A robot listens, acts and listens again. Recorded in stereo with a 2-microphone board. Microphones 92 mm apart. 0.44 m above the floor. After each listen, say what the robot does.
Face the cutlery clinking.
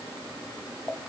Keep listening.
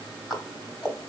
Keep listening.
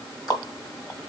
I can't make out cutlery clinking, only ticking.